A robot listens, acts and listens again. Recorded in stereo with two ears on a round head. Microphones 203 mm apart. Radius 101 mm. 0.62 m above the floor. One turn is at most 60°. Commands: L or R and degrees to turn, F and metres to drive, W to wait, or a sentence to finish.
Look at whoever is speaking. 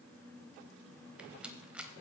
W
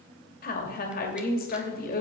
L40
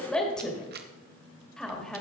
Facing the woman speaking, 2 to 4 m away.